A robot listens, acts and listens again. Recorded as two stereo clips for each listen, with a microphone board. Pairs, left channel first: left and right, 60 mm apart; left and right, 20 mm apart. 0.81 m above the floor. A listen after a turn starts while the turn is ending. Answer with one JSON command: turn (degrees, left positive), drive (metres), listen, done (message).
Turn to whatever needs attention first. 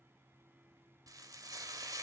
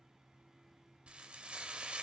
{"listen": true}
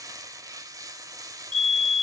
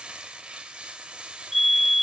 {"turn": 30}
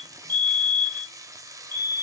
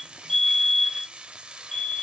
{"turn": 140}
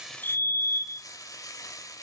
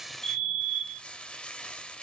{"done": "Found it: a fire alarm, straight ahead, 2 to 4 m away."}